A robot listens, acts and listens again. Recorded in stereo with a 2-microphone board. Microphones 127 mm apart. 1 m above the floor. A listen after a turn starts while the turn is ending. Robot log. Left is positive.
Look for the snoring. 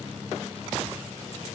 cmd idle
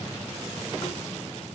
cmd idle
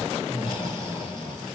note: The snoring: about 40° left or 140° left.
cmd yaw +40
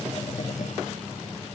cmd idle
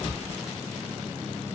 note: So it is at 100° left.
cmd yaw +100
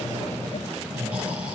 note: The snoring is now 10° right.
cmd yaw -10
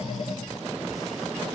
cmd idle
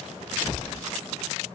end: Facing the snoring, over 4 m away.